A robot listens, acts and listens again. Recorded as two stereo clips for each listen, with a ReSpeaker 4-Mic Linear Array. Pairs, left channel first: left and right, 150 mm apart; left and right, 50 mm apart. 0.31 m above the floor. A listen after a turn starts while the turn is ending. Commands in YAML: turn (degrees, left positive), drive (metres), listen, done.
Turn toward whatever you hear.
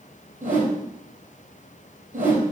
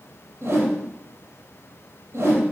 turn: -60
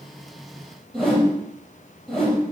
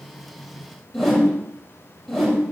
done: "Facing the whoosh."